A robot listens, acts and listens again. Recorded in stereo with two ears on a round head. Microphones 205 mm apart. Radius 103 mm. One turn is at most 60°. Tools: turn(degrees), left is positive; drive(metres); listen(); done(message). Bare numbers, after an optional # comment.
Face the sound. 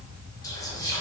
# The whispering: about 15° left or 165° left.
turn(15)
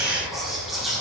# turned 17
done("Found it: whispering, straight ahead, under 1 m away.")